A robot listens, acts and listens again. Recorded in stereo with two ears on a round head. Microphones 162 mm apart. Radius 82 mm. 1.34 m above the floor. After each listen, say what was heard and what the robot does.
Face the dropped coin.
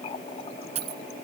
The dropped coin: about 35° right or 145° right. Turn 35° right.
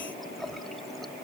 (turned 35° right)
Keep listening.
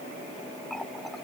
I heard a dropped coin, but can't make it out now. It was about straight ahead or 110° right.